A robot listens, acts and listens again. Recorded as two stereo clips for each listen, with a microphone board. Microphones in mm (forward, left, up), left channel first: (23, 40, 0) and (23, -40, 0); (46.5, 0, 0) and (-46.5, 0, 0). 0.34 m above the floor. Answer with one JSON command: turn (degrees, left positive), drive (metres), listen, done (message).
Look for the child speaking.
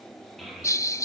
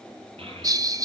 {"turn": 175}
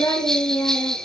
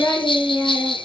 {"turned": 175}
{"turn": 55}
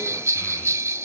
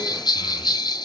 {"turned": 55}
{"listen": true}
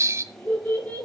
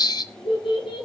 {"turn": 20}
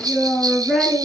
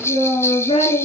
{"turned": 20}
{"done": "Facing the child speaking."}